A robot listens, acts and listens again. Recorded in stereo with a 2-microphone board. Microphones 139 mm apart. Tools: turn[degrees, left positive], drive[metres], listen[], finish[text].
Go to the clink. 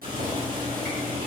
Action: listen[]
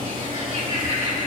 Action: listen[]
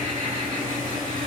Action: finish[I can't make out a clink to turn to.]